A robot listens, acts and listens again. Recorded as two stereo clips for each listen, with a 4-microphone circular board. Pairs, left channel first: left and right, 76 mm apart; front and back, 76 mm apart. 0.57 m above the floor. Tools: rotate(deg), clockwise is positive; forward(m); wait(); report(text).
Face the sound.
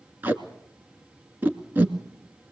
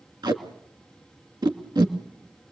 rotate(155)
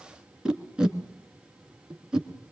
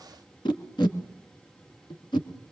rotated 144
rotate(10)
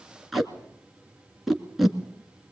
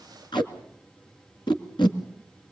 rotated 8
report("Facing the tape being pulled.")